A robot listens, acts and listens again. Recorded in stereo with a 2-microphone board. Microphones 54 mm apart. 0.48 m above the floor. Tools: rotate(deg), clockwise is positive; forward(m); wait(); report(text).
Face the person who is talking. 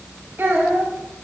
rotate(45)
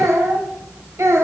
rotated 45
rotate(60)
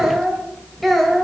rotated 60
report("Found it: a child speaking, straight ahead.")